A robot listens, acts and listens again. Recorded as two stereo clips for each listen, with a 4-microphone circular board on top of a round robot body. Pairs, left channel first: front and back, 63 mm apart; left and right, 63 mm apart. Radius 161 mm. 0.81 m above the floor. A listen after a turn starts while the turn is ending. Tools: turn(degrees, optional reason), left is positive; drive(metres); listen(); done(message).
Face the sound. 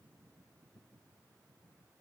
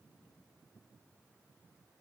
listen()
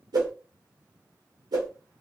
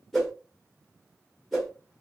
turn(degrees=175, reason="The whoosh: 175° left.")
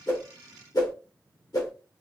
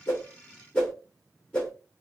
turn(degrees=15, reason="The whoosh is now 15° left.")
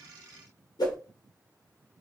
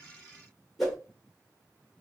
done("Facing the whoosh.")